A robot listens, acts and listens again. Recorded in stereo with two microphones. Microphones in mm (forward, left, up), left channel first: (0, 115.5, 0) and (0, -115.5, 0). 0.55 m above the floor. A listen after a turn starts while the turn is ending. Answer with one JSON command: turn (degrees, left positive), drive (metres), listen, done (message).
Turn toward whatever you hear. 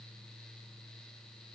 {"listen": true}
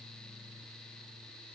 {"listen": true}
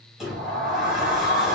{"turn": 30}
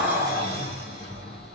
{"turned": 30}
{"turn": -30}
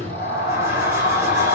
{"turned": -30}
{"turn": -15}
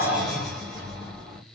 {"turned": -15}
{"done": "Facing the sliding door."}